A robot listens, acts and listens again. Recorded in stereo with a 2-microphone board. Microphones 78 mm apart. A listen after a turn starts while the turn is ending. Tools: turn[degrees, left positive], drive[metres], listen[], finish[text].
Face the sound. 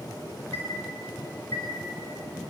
Thought: The chime: about 35° left or 145° left.
Action: turn[35]
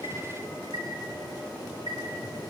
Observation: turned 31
Thought: So it is at 115° left.
Action: turn[115]
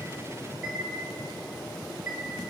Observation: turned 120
Action: finish[Found it: a chime, straight ahead, over 4 m away.]